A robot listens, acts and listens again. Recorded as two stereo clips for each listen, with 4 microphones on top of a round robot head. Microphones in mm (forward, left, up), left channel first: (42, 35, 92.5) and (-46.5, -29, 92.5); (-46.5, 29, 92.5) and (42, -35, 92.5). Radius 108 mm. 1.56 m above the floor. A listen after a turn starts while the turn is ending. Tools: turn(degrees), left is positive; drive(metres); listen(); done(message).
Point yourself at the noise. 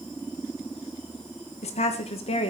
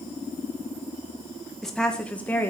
turn(degrees=70)
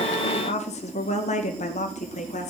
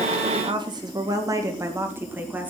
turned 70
turn(degrees=40)
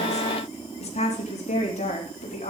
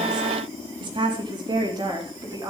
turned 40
turn(degrees=20)
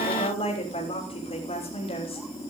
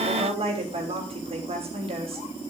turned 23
done("Found it: a woman speaking, straight ahead.")